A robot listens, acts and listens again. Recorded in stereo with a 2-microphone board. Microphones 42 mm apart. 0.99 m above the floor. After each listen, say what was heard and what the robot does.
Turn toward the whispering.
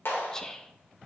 The whispering: about 15° left or 165° left. Turn 15° left.
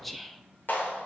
Found it: whispering, straight ahead.